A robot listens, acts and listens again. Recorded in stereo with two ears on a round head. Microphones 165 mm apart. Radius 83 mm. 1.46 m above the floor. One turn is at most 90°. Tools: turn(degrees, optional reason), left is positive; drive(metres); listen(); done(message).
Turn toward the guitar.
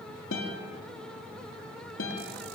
turn(degrees=90)
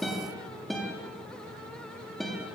done("Found it: a guitar, straight ahead.")